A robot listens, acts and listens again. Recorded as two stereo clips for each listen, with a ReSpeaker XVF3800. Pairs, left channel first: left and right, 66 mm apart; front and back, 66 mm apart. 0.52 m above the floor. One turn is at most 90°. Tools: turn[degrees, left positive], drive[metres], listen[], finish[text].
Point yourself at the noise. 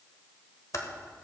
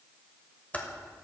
Thought: The typing on a keyboard: 65° left.
Action: turn[65]
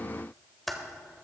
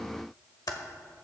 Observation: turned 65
Action: finish[Found it: typing on a keyboard, straight ahead.]